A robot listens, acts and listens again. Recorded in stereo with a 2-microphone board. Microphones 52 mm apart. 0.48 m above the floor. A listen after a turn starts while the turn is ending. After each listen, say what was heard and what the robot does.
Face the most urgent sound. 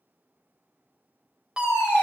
Turn 30° right.
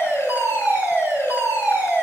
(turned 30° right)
So it is at 135° right. Turn 135° right.
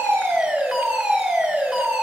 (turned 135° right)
Facing the fire alarm.